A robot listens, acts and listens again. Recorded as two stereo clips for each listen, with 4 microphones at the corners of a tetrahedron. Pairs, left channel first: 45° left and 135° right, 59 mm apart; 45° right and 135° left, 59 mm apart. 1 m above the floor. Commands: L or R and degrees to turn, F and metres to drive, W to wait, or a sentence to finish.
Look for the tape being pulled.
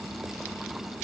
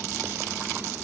W
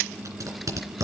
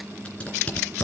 R115
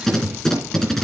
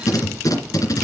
R40
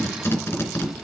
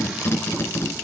Facing the tape being pulled.